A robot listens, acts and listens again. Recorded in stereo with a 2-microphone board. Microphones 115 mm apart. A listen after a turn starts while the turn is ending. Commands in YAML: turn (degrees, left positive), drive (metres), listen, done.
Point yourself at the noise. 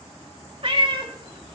turn: -45
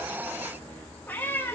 turn: 20
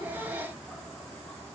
listen: true
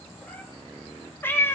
turn: 20
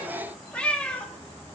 turn: 10
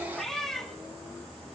done: "Found it: a cat meowing, straight ahead, 2 to 4 m away."